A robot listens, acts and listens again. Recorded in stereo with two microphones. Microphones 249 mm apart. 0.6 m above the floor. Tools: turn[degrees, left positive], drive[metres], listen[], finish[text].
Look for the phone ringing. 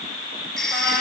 Action: turn[30]
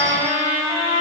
Action: listen[]
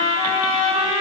Action: listen[]
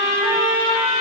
Action: finish[I heard a phone ringing, but can't make it out now. It was about 30° right or 150° left.]